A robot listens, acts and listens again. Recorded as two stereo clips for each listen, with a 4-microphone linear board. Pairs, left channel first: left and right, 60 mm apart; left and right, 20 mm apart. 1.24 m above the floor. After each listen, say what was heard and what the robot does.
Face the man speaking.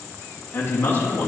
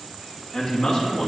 The man speaking: about 45° left or 135° left. Turn 45° left.
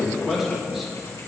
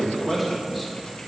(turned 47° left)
Found it: a man speaking, straight ahead.